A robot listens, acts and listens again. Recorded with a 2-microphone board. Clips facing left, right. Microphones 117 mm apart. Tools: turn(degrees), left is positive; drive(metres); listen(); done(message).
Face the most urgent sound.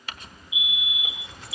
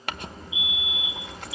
turn(degrees=15)
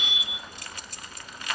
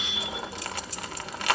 done("Facing the fire alarm.")